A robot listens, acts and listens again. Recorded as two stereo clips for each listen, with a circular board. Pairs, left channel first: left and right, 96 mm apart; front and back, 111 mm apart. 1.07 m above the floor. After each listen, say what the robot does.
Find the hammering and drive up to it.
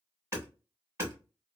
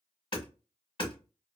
Turn 35° right.
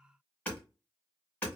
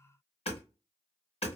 Turn 15° left.
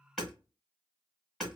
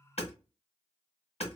Drive 1.0 m forward.
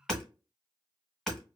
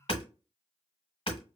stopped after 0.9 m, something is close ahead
I am next to the hammering.